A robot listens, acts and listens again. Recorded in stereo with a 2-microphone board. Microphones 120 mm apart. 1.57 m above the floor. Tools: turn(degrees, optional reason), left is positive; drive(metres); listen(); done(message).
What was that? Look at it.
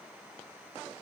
listen()
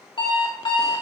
turn(degrees=45, reason="The alarm clock: about 45° left or 135° left.")
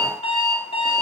turn(degrees=80, reason="So it is at 80° left.")
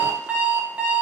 turn(degrees=-15, reason="The alarm clock is now 15° right.")
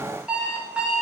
turn(degrees=-10, reason="The alarm clock is now 10° right.")
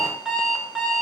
done("Found it: an alarm clock, straight ahead.")